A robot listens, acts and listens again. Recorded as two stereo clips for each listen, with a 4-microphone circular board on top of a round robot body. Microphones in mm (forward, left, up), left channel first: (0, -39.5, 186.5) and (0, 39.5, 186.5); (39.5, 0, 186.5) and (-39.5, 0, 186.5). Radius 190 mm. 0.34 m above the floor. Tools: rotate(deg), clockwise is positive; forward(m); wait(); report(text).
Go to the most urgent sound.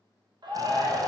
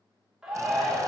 rotate(-95)
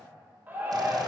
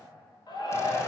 rotate(-20)
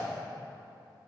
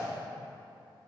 wait()
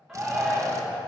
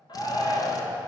forward(1.0)
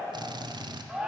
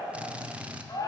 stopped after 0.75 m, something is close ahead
rotate(-10)
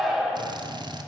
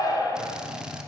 report("I am next to the shout.")